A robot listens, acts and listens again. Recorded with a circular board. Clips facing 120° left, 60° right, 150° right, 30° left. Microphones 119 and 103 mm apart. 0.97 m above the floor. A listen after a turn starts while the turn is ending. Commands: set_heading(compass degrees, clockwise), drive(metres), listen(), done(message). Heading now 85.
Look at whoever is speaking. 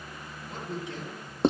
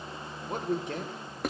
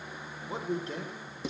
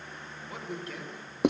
set_heading(175)
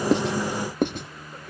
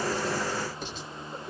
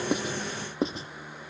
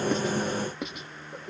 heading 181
listen()
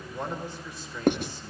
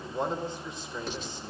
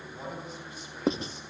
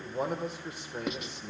set_heading(171)
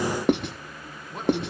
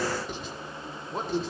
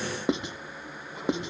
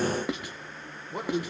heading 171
done("Facing the man speaking, 2 to 4 m away.")